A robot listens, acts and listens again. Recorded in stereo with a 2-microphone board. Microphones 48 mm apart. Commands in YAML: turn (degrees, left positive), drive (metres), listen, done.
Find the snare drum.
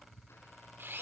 listen: true
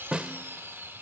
turn: -20
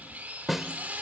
done: "Facing the snare drum."